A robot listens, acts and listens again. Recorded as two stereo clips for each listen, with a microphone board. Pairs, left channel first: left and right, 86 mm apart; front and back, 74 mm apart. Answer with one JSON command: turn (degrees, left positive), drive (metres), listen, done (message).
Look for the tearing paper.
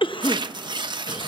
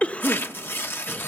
{"turn": -60}
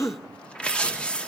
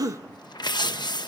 {"turn": 10}
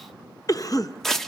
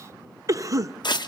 {"done": "Found it: tearing paper, straight ahead, under 1 m away."}